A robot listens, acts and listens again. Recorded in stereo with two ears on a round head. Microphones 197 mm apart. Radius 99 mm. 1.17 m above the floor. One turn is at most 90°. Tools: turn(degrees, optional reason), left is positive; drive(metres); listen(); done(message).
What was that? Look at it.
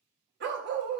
turn(degrees=-55, reason="The dog barking: about 55° right or 125° right.")
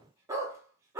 turn(degrees=-15, reason="So it is at 15° right.")
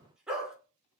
done("Found it: a dog barking, straight ahead.")